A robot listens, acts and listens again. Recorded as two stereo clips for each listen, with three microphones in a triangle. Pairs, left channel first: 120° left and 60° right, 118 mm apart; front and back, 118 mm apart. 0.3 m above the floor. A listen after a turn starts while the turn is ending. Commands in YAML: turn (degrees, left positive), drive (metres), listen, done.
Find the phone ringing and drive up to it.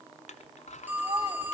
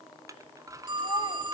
turn: -135
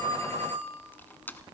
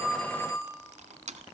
turn: -60
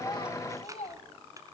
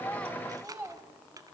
listen: true
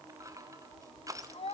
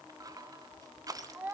listen: true
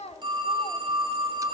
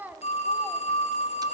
turn: -15
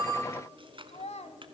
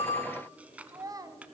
listen: true
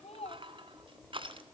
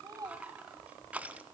listen: true
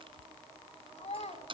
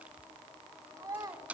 done: "I heard a phone ringing from this way, but can't make it out now. I did not reach it."